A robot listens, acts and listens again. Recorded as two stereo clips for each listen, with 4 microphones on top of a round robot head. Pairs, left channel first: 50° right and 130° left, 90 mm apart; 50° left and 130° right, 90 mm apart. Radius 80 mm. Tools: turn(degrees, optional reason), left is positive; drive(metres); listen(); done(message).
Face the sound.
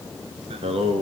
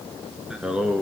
turn(degrees=155, reason="The singing: 155° left.")
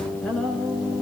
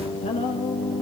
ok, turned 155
turn(degrees=35, reason="The singing is now 35° left.")
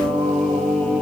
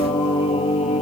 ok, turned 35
turn(degrees=35, reason="The singing is now 35° left.")
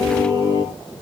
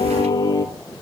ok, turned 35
done("Facing the singing, 2 to 4 m away.")